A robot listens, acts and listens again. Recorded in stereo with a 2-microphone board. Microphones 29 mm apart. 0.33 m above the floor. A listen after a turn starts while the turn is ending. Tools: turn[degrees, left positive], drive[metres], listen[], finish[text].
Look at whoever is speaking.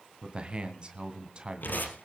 Thought: The man speaking: about 30° right or 150° right.
Action: turn[-30]
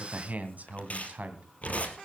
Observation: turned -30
Thought: So it is at 115° right.
Action: turn[-115]
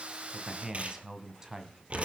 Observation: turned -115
Thought: The man speaking is now 25° right.
Action: turn[-25]
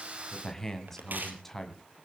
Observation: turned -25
Thought: The man speaking is now 10° left.
Action: turn[10]
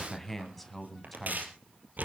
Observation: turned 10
Action: finish[Facing the man speaking, 2 to 4 m away.]